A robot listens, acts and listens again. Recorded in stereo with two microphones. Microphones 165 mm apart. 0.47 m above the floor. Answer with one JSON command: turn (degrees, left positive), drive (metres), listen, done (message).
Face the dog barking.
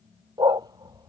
{"turn": -25}
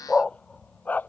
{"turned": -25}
{"turn": 10}
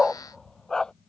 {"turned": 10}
{"done": "Found it: a dog barking, straight ahead."}